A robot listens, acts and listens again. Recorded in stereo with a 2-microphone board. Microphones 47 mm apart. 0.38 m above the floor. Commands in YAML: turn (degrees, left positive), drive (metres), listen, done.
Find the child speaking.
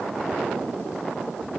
listen: true
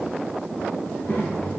turn: 50
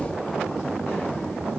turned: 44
listen: true
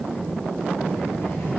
turn: 70
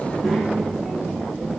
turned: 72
done: "Facing the child speaking."